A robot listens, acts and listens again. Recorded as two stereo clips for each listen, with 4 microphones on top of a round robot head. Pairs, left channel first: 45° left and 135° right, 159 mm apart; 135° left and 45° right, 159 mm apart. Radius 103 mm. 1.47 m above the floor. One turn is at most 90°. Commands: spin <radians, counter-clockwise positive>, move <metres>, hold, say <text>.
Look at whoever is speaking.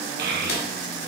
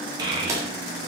spin -1.57
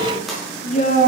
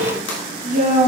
say Found it: a child speaking, straight ahead, 1 to 2 m away.